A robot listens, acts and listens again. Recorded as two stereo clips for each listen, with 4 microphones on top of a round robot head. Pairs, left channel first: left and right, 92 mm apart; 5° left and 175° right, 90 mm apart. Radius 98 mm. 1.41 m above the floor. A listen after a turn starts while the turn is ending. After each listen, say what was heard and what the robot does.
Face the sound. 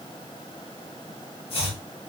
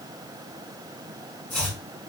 The chopping: 80° left. Turn 80° left.
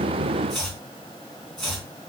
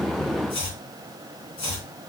Facing the chopping, 2 to 4 m away.